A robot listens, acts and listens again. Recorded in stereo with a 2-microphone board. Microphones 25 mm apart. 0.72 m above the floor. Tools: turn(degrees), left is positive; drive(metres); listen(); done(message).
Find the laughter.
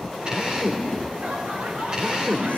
turn(degrees=-75)
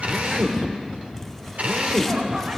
listen()
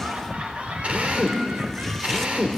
turn(degrees=-55)
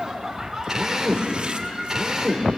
turn(degrees=-10)
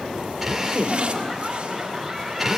done("Facing the laughter, over 4 m away.")